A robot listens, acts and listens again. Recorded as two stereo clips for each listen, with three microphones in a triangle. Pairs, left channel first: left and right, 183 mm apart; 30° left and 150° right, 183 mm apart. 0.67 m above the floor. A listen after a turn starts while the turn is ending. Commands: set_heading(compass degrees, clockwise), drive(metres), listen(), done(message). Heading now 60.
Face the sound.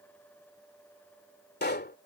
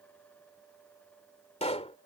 set_heading(340)
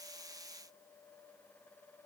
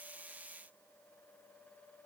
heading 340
done("Facing where the pop came from. I can't hear it now.")